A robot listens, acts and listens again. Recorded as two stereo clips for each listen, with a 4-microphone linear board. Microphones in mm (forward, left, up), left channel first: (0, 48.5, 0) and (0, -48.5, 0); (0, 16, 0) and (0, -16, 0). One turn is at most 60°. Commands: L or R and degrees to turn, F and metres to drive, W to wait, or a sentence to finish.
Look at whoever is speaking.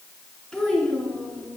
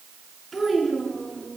L30
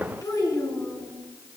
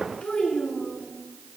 L60
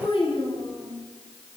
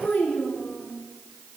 L60
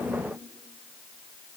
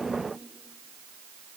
L30
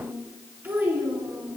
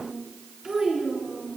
R20
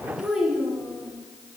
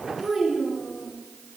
Facing the child speaking.